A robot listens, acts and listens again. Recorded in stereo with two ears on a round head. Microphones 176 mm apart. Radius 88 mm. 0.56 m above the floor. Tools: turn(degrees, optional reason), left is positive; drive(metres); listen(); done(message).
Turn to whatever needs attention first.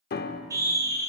turn(degrees=-20, reason="The scream: about 20° right or 160° right.")
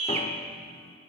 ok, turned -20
turn(degrees=-140, reason="So it is at 140° right.")
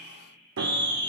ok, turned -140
turn(degrees=-25, reason="The scream is now 25° right.")
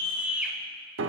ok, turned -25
turn(degrees=-10, reason="The scream is now 10° right.")
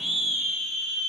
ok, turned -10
done("Facing the scream, 2 to 4 m away.")